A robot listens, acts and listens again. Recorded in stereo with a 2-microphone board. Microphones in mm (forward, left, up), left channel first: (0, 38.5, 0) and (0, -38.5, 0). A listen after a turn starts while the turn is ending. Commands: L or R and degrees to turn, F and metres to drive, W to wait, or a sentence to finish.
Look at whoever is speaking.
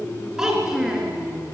R30
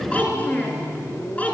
L20
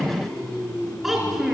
Facing the child speaking.